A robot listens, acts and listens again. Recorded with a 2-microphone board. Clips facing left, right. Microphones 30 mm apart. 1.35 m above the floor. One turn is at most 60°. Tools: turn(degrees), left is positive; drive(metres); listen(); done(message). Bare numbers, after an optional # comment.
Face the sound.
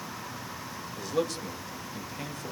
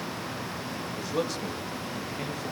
turn(-30)
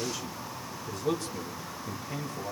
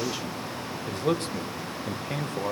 # So it is at 115° right.
turn(-60)
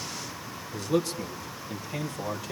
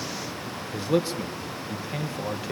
# The man speaking is now 25° right.
turn(-25)
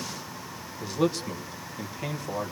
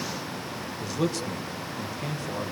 done("Found it: a man speaking, straight ahead, 1 to 2 m away.")